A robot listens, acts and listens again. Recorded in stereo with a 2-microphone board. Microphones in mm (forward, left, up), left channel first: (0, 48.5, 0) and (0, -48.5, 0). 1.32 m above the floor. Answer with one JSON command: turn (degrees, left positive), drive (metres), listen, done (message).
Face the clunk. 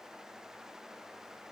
{"listen": true}
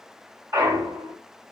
{"turn": -35}
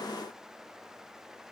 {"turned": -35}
{"listen": true}
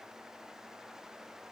{"done": "I heard a clunk, but can't make it out now. It was about straight ahead or 110° right."}